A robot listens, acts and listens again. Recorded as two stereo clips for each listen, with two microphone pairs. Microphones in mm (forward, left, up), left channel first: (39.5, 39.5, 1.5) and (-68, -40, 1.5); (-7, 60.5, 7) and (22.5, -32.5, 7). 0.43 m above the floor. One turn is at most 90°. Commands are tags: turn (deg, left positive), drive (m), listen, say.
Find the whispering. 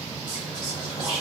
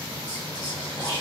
<turn deg="85"/>
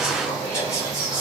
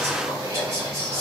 <turn deg="-25"/>
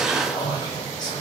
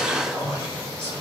<turn deg="-15"/>
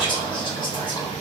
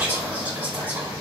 <say>Found it: whispering, straight ahead.</say>